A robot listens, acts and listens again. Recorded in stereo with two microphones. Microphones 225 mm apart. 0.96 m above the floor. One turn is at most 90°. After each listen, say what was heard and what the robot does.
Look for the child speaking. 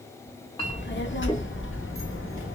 The child speaking: about 70° left or 110° left. Turn 70° left.
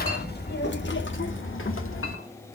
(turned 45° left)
So it is at 75° left. Turn 75° left.
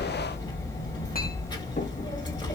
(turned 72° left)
The child speaking is now 20° left. Turn 20° left.
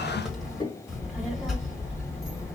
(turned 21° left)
Found it: a child speaking, straight ahead, 1 to 2 m away.